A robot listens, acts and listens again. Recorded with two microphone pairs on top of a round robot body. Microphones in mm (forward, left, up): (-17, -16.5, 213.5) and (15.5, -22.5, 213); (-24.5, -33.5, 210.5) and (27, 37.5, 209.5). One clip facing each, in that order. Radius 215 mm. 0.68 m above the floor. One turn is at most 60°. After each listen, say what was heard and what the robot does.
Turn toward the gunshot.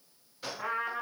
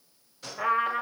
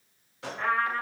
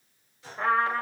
The gunshot: 115° right. Turn 60° right.
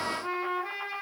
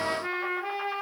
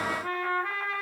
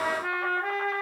Nothing new. It was at 55° right. Turn 55° right.
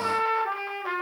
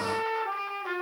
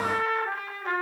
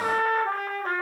Facing where the gunshot came from. I can't hear it now.